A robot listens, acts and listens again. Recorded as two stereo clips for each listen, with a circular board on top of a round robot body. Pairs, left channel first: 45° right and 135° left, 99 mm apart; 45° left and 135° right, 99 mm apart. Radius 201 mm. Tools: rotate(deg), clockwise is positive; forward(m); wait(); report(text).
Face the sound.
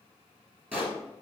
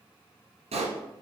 rotate(150)
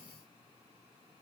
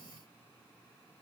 report("Facing where the pop came from. I can't hear it now.")